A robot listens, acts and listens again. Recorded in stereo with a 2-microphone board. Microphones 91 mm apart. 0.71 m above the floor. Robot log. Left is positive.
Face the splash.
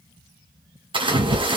note: The splash: about 70° right or 110° right.
cmd yaw -70
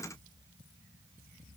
cmd idle
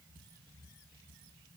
end: I heard a splash, but can't make it out now. It was about straight ahead or 40° right.